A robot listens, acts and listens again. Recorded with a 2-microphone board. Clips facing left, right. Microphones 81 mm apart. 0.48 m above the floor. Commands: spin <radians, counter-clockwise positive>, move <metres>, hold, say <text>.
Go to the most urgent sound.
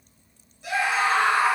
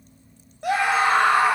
spin -1.13
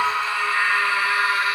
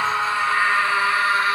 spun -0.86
spin -0.70
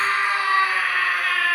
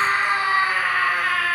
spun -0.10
spin -0.52
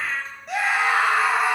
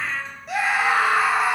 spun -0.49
move 1.0
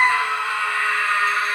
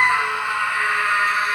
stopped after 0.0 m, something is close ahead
spin -0.26
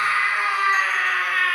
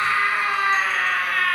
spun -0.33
say Something is in my way. I am facing the scream but have not reached it.